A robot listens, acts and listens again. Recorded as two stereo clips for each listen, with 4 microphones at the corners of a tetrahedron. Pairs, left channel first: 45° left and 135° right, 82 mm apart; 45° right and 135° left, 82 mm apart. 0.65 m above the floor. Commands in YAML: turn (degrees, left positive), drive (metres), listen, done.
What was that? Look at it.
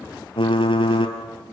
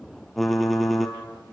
turn: 45
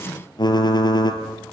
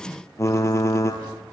turn: 10
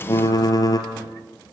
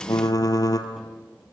done: "Facing the typing on a keyboard."